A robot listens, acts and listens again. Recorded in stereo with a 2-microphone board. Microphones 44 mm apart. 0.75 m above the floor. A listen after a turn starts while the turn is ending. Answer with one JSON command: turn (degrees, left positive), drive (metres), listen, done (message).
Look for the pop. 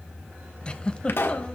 {"turn": 60}
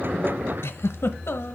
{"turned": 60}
{"listen": true}
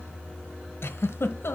{"done": "I heard a pop, but can't make it out now. It was about straight ahead or 60° left."}